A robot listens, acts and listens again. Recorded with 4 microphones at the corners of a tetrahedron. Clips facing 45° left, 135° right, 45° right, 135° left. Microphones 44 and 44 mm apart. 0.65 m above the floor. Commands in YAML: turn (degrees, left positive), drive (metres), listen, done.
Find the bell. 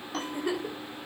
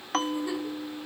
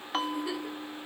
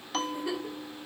turn: -110
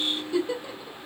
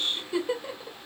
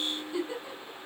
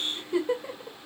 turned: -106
listen: true
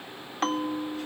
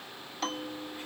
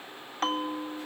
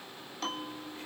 done: "Found it: a bell, straight ahead."